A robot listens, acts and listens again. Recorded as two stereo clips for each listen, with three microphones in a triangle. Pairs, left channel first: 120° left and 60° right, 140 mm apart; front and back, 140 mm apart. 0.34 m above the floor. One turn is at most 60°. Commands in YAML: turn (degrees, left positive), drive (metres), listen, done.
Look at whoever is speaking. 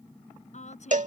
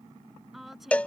turn: 60
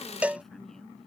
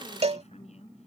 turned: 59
turn: 30
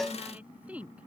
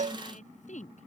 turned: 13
turn: 20
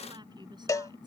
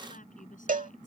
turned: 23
listen: true
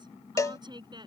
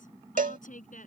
done: "Found it: a woman speaking, straight ahead."